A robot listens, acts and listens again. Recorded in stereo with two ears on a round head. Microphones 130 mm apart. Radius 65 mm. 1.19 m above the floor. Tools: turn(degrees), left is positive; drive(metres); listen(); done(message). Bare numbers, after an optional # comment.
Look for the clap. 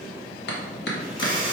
turn(90)
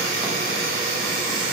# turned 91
listen()
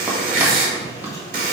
listen()
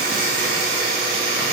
done("I heard a clap from this way, but can't make it out now.")